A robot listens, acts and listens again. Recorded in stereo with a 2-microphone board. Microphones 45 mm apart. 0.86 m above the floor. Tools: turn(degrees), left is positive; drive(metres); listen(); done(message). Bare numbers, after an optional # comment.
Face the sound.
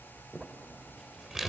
turn(-30)
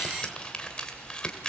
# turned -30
# So it is at 20° left.
turn(20)
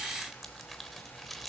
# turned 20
done("Found it: crumpling, straight ahead.")